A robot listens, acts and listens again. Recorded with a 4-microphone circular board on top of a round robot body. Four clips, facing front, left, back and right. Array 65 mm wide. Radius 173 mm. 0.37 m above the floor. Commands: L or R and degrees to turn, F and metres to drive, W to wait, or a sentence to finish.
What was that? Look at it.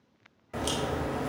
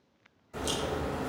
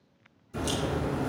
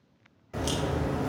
R25
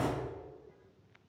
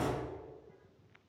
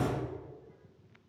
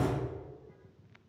Found it: a crack, straight ahead.